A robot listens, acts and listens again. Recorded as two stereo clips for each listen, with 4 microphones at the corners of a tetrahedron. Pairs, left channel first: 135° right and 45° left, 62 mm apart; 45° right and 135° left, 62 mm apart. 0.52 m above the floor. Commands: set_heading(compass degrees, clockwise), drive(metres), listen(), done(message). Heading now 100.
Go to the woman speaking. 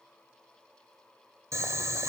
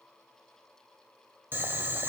listen()
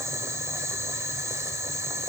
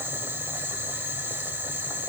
listen()
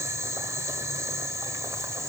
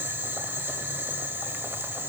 done("I can't make out a woman speaking, only boiling.")